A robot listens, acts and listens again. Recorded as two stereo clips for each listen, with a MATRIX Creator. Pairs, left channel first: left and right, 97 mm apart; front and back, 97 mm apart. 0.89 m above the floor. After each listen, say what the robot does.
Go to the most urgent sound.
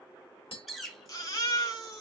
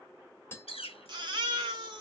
Turn 140° left.
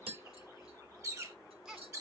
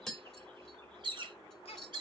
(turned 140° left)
Turn 10° right.
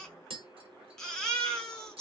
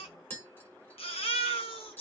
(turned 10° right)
Drive 1.0 m forward.
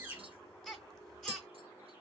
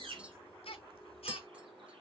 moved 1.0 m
Drive 1.0 m forward.
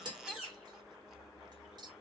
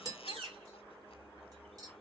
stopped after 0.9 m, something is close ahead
Keep listening.
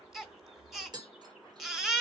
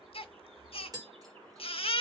I am next to the baby crying.